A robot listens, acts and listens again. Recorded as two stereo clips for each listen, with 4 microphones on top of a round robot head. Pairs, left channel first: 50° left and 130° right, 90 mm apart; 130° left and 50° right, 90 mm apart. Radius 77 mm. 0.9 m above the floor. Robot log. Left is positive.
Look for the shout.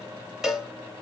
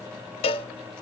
cmd idle
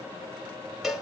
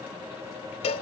cmd idle
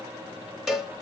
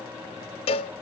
end: I can't make out a shout to turn to.